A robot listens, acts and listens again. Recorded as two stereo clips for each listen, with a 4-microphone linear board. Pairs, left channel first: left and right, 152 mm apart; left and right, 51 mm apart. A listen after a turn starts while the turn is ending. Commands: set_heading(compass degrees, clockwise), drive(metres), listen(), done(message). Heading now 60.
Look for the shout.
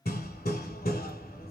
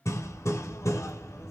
listen()
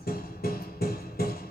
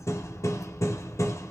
listen()
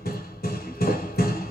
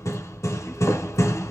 done("I can't make out a shout to turn to.")